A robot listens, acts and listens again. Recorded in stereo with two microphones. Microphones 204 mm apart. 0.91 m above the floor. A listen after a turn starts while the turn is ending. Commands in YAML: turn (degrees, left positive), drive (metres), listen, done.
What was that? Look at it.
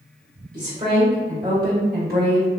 turn: -50
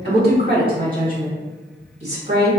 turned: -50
turn: -30
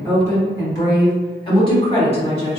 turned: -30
turn: 30
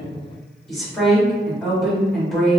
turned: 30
done: "Facing the woman speaking."